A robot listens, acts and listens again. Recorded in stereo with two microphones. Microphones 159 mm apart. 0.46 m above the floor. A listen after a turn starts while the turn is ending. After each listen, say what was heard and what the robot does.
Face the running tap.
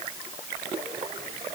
Keep listening.
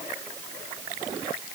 Keep listening.
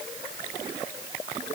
I can't make out a running tap to turn to.